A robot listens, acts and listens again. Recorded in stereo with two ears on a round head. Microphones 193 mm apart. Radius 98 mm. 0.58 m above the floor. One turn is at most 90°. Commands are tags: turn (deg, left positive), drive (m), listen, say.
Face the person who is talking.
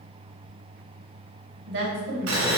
<turn deg="-60"/>
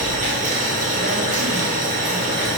<listen/>
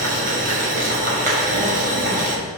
<listen/>
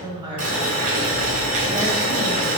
<turn deg="-20"/>
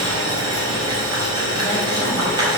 <listen/>
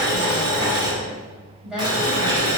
<say>Facing the woman speaking, 2 to 4 m away.</say>